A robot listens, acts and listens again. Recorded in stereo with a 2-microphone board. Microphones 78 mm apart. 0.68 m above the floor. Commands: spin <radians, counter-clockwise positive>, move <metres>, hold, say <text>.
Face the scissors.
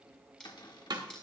spin 0.52
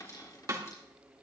hold
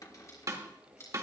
spin 2.44
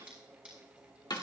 spin -0.26
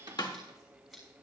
say Found it: scissors, straight ahead, over 4 m away.